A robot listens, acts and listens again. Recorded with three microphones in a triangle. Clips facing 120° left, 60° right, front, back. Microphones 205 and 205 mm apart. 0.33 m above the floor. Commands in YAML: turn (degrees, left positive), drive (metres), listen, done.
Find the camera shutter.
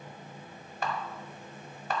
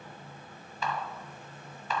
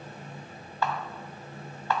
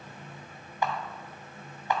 turn: 110
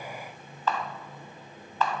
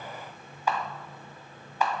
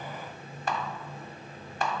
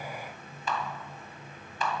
turn: 15
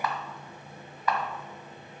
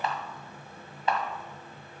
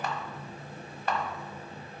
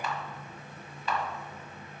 done: "Facing the camera shutter."